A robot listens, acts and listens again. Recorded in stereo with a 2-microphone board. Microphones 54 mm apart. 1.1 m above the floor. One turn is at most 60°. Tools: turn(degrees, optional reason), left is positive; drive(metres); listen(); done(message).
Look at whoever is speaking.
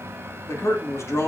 turn(degrees=60, reason="The man speaking: about 65° left or 115° left.")
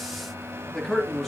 done("Found it: a man speaking, straight ahead, 2 to 4 m away.")